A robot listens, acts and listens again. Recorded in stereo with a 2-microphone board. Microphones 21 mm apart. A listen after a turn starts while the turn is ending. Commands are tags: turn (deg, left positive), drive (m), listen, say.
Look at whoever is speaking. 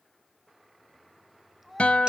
<turn deg="-30"/>
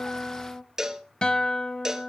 <listen/>
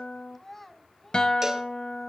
<turn deg="15"/>
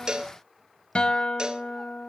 <listen/>
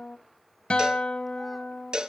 <listen/>
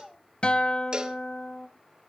<say>Facing the child speaking, 2 to 4 m away.</say>